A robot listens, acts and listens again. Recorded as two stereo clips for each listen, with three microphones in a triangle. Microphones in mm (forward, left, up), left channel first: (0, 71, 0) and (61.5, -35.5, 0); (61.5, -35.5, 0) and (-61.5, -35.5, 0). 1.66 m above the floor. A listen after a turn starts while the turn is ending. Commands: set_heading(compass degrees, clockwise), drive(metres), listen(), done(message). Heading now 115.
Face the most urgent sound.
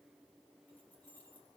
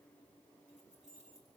listen()
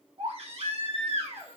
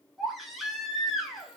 set_heading(205)
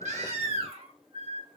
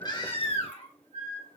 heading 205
set_heading(235)
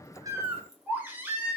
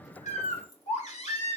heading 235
set_heading(220)
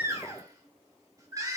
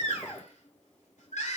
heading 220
done("Found it: a baby crying, straight ahead.")